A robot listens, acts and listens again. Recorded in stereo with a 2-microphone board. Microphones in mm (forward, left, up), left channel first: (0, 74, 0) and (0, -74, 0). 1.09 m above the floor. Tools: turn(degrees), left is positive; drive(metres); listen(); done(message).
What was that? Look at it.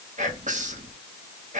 turn(degrees=-50)
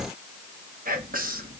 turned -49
turn(degrees=-75)
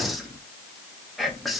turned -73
done("Facing the whispering, 1 to 2 m away.")